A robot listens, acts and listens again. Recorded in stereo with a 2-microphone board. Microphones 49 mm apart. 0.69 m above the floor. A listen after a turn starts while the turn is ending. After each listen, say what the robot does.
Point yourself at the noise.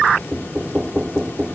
Turn 25° right.
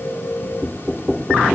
Found it: knocking, straight ahead.